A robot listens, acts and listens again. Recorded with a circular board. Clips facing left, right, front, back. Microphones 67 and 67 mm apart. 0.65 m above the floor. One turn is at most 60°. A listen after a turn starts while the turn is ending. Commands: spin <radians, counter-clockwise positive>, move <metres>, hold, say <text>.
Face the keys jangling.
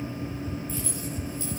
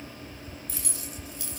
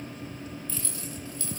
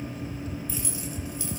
spin -1.05
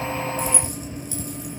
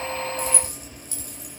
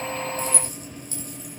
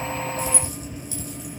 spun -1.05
spin -0.79
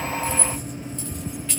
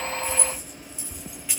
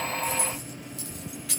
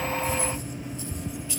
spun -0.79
spin -0.17
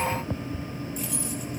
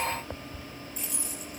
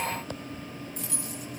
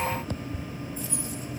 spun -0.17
say Facing the keys jangling.